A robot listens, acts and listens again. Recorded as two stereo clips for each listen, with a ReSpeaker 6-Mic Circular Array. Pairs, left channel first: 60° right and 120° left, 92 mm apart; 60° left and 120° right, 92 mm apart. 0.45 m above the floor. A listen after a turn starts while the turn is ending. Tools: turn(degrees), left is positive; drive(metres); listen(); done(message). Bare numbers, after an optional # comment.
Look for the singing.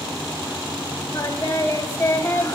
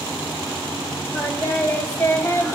done("Found it: singing, straight ahead, 1 to 2 m away.")